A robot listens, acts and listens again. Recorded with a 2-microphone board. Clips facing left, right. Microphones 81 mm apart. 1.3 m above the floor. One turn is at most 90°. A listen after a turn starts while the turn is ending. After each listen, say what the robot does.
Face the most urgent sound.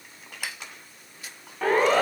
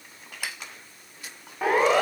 Turn 30° right.
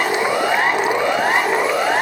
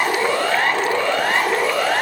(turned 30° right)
Turn 20° left.
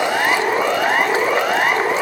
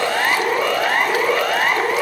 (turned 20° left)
Facing the siren.